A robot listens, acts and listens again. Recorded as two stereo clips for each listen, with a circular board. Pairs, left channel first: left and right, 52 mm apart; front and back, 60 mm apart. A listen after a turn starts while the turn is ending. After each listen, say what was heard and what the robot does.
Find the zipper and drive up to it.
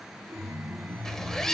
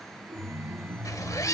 The zipper: 10° left. Turn 10° left.
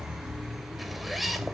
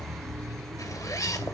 Drive 1.0 m forward.
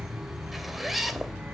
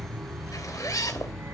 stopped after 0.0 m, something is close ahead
Something is in my way. I am facing the zipper but have not reached it.